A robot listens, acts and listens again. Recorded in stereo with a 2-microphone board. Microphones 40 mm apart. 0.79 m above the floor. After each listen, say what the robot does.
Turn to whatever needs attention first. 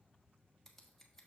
Keep listening.
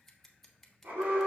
Turn 65° right.
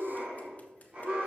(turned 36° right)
Turn 45° right.
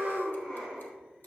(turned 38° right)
Found it: an alarm, straight ahead, 2 to 4 m away.